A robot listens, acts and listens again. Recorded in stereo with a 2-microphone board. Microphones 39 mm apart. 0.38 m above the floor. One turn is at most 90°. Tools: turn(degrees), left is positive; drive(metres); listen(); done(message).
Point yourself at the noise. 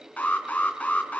turn(degrees=40)
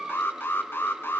turn(degrees=90)
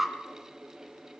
done("Found it: an alarm, straight ahead, 2 to 4 m away.")